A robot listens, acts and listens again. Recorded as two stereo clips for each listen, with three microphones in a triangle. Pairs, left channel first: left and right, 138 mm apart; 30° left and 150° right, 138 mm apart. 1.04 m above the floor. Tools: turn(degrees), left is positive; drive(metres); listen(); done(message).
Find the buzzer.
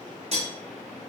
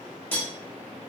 listen()
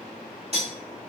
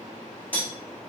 listen()
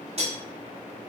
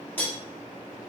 done("I can't make out a buzzer, only cutlery clinking.")